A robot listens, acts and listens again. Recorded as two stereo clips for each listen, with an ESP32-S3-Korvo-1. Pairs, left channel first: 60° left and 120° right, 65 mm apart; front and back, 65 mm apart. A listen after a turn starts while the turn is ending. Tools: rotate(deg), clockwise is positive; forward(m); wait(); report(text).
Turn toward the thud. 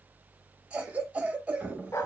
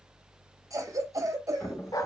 rotate(50)
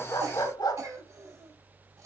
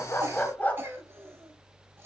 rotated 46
report("I heard a thud from this way, but can't make it out now.")